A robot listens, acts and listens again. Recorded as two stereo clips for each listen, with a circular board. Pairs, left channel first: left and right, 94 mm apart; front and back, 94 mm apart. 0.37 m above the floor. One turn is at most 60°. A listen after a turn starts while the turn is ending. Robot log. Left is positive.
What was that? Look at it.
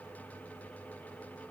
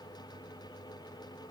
cmd idle
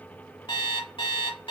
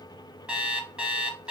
note: The alarm clock: 100° left.
cmd yaw +60
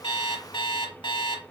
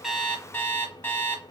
note: The alarm clock is now 65° left.
cmd yaw +60
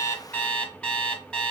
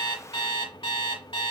note: The alarm clock is now 15° left.
cmd yaw +15
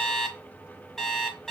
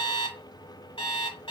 end: Facing the alarm clock.